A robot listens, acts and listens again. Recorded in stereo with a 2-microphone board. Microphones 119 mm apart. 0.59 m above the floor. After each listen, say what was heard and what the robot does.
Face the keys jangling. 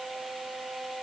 Keep listening.
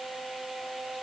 Keep listening.
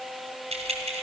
The keys jangling: about 70° right or 110° right. Turn 70° right.
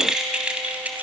So it is at 15° right. Turn 15° right.
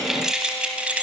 The keys jangling is now 10° right. Turn 10° right.
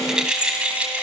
The keys jangling is now 15° right. Turn 15° right.
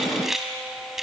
Found it: keys jangling, straight ahead.